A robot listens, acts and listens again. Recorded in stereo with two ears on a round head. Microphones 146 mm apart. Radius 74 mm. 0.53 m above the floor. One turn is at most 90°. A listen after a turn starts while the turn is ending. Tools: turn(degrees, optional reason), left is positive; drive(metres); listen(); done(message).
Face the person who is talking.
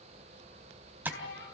turn(degrees=90)
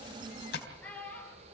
turn(degrees=10, reason="So it is at 10° left.")
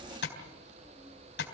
listen()
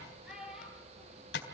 done("Facing the child speaking, over 4 m away.")